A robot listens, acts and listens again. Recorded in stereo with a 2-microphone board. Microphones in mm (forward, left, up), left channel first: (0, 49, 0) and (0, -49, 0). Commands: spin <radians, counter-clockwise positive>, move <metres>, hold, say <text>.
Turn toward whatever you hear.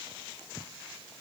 hold
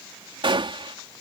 spin -1.05
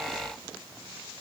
hold
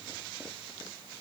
say I heard a gunshot, but can't make it out now. It was about straight ahead or 60° right.